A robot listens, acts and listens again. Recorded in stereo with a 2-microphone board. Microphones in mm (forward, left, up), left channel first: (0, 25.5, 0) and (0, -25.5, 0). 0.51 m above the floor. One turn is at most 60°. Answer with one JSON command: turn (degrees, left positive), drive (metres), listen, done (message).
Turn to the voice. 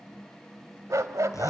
{"listen": true}
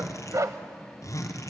{"listen": true}
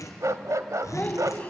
{"turn": 25}
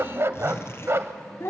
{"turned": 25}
{"turn": 60}
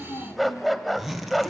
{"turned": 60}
{"turn": 60}
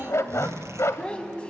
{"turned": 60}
{"turn": 20}
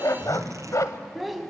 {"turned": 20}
{"done": "Found it: a child speaking, straight ahead, 2 to 4 m away."}